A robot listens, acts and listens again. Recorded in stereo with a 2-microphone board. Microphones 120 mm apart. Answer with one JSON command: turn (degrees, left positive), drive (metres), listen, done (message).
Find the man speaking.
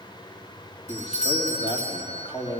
{"turn": 40}
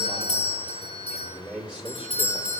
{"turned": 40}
{"turn": -10}
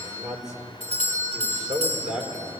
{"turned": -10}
{"turn": -10}
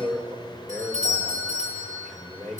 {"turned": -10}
{"done": "Facing the man speaking."}